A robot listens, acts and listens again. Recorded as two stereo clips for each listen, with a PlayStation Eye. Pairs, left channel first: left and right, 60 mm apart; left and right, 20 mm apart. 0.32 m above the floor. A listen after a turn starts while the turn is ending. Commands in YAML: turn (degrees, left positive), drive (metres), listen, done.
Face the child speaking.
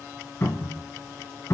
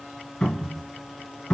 listen: true
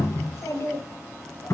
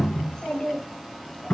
turn: 45
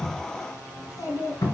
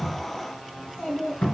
turn: 65
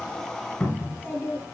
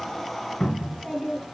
turn: 30
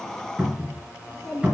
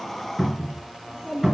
turn: 10
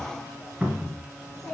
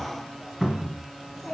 done: "Facing the child speaking, 2 to 4 m away."